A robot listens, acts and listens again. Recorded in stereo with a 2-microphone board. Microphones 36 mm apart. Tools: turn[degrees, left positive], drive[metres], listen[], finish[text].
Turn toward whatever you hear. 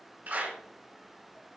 Thought: The clap: about 55° right or 125° right.
Action: turn[-55]
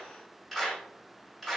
Action: finish[Found it: a clap, straight ahead.]